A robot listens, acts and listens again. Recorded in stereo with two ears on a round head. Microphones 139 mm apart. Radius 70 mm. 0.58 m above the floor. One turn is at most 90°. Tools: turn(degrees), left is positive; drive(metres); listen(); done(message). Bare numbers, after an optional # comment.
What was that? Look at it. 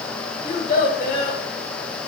# The child speaking: about 55° left or 125° left.
turn(55)
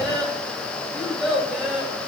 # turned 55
done("Found it: a child speaking, straight ahead, 2 to 4 m away.")